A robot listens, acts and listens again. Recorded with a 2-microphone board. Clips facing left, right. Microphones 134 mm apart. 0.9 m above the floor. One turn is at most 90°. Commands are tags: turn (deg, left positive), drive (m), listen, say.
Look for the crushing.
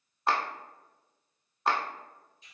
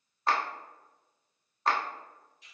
<listen/>
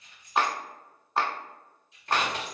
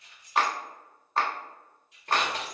<turn deg="-45"/>
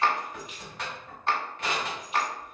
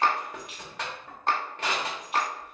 <turn deg="-90"/>
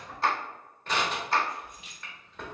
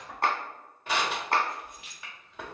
<turn deg="-10"/>
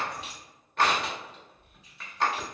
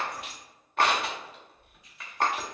<say>Facing the crushing.</say>